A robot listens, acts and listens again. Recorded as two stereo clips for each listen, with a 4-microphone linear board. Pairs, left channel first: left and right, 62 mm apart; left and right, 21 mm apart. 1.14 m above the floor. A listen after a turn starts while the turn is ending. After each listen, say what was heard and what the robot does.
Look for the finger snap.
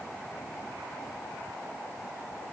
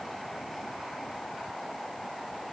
Keep listening.
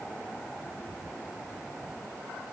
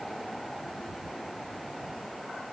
Keep listening.
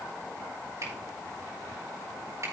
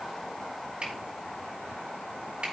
The finger snap: about 55° right or 125° right. Turn 55° right.
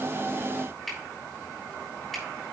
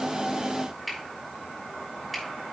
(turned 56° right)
Facing the finger snap.